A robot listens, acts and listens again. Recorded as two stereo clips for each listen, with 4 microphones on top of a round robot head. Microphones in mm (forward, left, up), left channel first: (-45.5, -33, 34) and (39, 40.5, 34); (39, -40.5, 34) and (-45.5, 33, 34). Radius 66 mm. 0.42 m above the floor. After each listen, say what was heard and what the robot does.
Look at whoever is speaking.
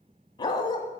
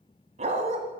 Keep listening.
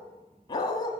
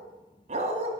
Keep listening.
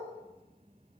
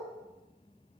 I can't make out anyone speaking to turn to.